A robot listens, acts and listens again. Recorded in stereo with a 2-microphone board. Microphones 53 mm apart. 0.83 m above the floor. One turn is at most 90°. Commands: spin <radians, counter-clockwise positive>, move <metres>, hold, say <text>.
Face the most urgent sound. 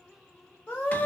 spin 0.79
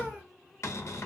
hold
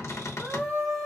say Found it: a scream, straight ahead.